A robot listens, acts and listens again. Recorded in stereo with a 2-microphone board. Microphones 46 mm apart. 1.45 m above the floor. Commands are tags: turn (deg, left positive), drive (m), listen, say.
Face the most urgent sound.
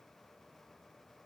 <listen/>
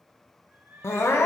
<turn deg="70"/>
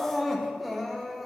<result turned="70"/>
<say>Found it: crying, straight ahead.</say>